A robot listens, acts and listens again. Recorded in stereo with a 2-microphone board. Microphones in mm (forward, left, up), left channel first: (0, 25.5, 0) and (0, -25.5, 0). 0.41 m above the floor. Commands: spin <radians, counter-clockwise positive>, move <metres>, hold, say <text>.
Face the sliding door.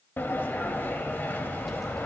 spin 0.70
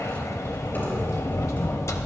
spin 1.66
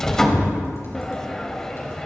spin 0.17
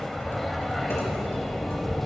say Facing the sliding door, under 1 m away.